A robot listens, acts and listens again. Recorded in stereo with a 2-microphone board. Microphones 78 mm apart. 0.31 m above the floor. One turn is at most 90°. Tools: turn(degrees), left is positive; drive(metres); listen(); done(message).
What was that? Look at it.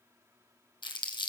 turn(degrees=90)
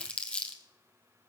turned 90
turn(degrees=15)
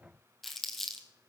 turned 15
done("Facing the crumpling, 1 to 2 m away.")